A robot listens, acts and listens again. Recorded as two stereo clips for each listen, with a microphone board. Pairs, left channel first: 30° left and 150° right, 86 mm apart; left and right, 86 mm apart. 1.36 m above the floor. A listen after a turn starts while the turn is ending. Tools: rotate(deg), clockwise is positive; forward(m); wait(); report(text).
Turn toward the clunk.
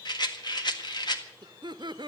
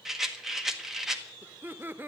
wait()
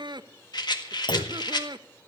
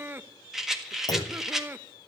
rotate(-50)
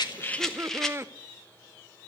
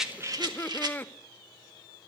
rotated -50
report("I heard a clunk from this way, but can't make it out now.")